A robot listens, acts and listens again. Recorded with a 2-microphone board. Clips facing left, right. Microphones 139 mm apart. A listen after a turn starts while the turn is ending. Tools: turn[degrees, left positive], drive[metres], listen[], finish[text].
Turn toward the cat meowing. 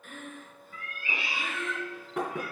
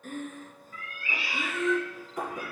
Thought: The cat meowing: about 25° left or 155° left.
Action: turn[25]
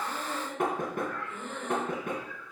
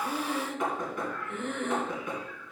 Thought: So it is at 10° right.
Action: turn[-10]
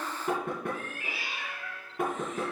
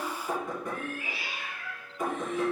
Action: finish[Facing the cat meowing.]